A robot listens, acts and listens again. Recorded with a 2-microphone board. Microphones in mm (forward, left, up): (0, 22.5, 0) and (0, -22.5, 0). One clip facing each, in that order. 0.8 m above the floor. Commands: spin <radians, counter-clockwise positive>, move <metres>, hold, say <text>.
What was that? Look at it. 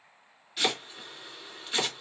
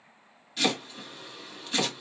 spin 0.52
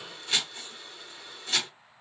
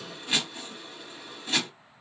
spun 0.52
spin -0.35
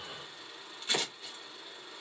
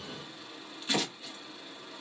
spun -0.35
say Facing the chopping, 1 to 2 m away.